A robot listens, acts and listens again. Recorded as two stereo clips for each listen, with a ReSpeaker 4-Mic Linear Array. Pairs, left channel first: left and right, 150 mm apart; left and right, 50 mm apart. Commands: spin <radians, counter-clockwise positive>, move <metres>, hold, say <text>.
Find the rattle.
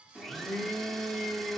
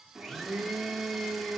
hold
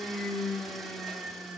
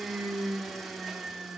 hold
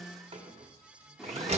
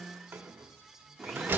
spin -0.70
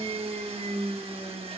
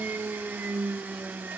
hold
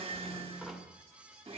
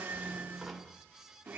hold
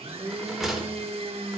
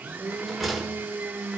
say Found it: a rattle, straight ahead, 1 to 2 m away.